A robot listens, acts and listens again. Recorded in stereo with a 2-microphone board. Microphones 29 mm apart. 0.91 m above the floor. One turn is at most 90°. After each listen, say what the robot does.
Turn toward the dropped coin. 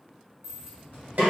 Turn 15° right.
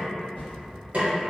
Keep listening.
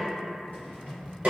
I heard a dropped coin, but can't make it out now. It was about straight ahead or 150° right.